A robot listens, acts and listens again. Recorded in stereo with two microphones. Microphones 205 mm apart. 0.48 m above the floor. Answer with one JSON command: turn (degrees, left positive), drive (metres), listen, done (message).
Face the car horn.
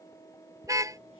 {"turn": -15}
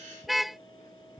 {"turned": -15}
{"done": "Facing the car horn."}